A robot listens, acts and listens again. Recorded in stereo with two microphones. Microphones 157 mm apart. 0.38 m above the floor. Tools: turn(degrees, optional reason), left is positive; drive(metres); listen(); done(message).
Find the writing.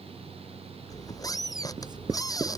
turn(degrees=-25, reason="The writing: about 25° right or 155° right.")
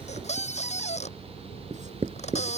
turn(degrees=-130, reason="So it is at 130° right.")
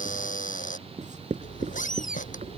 turn(degrees=-55, reason="The writing is now 55° right.")
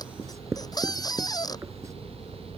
turn(degrees=-20, reason="The writing is now 20° right.")
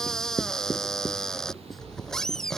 done("Found it: writing, straight ahead.")